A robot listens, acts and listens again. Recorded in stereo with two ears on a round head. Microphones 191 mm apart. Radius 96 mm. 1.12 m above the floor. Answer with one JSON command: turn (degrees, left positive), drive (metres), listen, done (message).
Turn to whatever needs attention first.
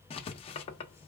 {"listen": true}
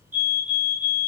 {"turn": -35}
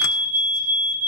{"turn": -110}
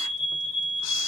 {"turn": -55}
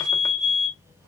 {"done": "Found it: a fire alarm, straight ahead."}